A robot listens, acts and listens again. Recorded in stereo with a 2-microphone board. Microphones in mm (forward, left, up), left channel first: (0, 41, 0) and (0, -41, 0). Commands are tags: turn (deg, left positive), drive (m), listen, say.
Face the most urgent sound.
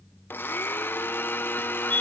<turn deg="-90"/>
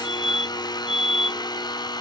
<say>Facing the fire alarm.</say>